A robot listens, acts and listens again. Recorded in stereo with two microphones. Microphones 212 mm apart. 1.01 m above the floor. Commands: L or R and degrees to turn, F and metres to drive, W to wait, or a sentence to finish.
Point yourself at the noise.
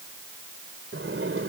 R90
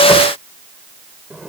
Facing the sliding door.